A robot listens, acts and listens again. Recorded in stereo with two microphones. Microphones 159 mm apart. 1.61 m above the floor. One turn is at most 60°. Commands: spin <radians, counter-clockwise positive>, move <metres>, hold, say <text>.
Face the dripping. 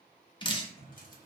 spin 0.52
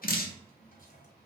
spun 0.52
spin 1.05
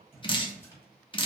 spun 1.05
spin 0.52
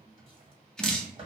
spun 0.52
say Facing the dripping.